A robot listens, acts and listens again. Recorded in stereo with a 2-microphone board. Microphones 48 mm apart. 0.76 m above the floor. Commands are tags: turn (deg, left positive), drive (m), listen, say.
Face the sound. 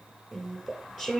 <turn deg="-30"/>
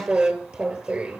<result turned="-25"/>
<turn deg="-150"/>
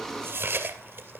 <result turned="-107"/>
<turn deg="-45"/>
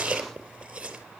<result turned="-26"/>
<turn deg="-20"/>
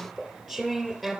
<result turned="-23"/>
<say>Found it: chewing, straight ahead.</say>